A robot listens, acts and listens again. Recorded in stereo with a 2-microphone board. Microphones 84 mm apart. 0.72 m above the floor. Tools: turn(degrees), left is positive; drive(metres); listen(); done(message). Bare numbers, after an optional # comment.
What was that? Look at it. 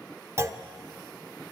# The clunk: about 35° right or 145° right.
turn(-35)
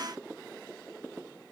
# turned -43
listen()
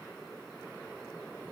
done("I heard a clunk, but can't make it out now. It was about 10° left or 100° right.")